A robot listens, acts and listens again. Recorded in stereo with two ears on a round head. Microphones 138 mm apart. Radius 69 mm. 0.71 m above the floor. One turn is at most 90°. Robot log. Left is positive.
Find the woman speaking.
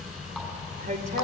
note: The woman speaking: about 50° right or 130° right.
cmd yaw -50
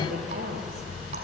note: So it is at 70° right.
cmd yaw -70
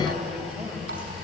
end: Found it: a woman speaking, straight ahead.